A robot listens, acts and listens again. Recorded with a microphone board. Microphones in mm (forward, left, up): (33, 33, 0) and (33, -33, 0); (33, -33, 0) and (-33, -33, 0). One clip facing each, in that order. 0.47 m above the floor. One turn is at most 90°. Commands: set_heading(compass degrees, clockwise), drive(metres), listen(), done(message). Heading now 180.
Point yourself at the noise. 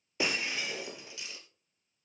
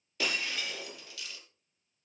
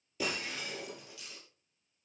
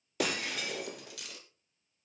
set_heading(90)
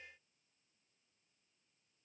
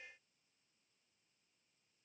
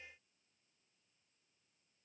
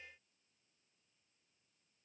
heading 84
set_heading(24)
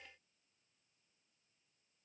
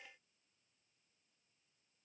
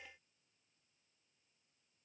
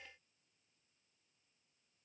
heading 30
set_heading(20)
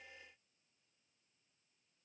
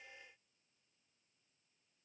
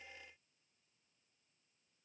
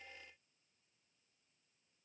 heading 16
done("I heard breaking glass from this way, but can't make it out now.")